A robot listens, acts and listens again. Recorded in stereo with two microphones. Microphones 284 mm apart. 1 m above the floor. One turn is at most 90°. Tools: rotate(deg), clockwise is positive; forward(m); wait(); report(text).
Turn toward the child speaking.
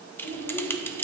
rotate(-70)
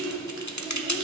rotate(10)
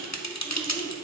wait()
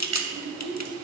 report("Found it: a child speaking, straight ahead.")